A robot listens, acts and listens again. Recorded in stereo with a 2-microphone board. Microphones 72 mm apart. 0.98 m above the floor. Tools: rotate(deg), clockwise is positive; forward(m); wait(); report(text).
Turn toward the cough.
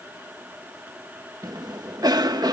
rotate(60)
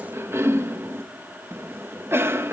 rotate(40)
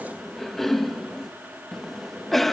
report("Found it: a cough, straight ahead.")